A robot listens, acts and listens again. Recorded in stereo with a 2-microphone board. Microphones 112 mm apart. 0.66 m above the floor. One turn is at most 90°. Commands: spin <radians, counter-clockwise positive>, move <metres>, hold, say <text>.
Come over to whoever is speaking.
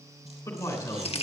spin 0.52
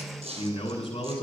spin 1.57
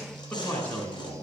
spin 0.26
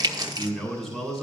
move 1.0
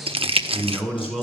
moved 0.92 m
move 1.0
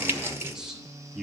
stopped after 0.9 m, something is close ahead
say I am next to the man speaking.